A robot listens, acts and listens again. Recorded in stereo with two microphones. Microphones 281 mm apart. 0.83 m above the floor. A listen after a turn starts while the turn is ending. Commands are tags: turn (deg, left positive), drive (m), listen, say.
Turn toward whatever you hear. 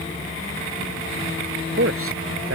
<turn deg="-50"/>
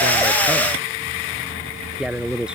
<say>Found it: a man speaking, straight ahead.</say>